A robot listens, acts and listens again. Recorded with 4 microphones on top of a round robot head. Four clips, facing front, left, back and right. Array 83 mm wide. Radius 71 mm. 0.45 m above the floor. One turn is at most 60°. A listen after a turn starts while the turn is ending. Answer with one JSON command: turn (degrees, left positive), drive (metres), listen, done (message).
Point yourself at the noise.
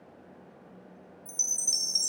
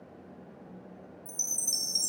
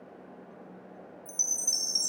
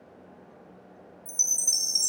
{"turn": -15}
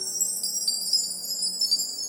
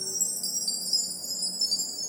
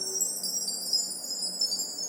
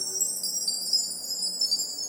{"done": "Facing the chime."}